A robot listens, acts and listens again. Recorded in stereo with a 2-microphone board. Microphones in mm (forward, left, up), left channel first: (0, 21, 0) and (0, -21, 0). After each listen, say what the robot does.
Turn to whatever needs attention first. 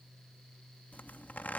Keep listening.
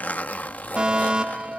Turn 20° right.
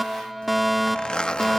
Found it: a fire alarm, straight ahead.